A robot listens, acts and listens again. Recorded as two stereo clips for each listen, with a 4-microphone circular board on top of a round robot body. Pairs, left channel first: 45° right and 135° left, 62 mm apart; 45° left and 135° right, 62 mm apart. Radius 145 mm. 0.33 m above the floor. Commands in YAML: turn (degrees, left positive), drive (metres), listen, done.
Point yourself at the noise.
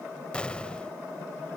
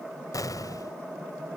turn: 30
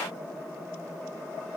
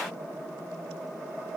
done: "Facing where the explosion came from. I can't hear it now."